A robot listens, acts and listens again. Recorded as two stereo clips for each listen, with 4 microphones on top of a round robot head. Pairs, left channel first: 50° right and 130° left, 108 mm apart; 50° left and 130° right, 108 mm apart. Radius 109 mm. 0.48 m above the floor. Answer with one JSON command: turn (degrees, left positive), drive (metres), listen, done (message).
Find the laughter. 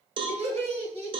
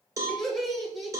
{"turn": 145}
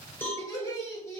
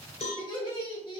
{"turn": 10}
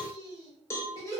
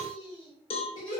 {"turn": 10}
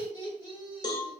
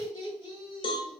{"done": "Found it: laughter, straight ahead."}